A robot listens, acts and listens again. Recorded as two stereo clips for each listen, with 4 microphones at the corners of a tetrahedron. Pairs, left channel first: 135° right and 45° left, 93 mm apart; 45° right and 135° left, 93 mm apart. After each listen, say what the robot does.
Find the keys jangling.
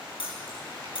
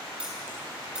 Turn 145° right.
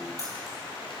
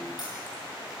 Keep listening.
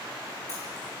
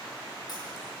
Keep listening.
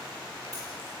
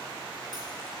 I heard keys jangling from this way, but can't make it out now.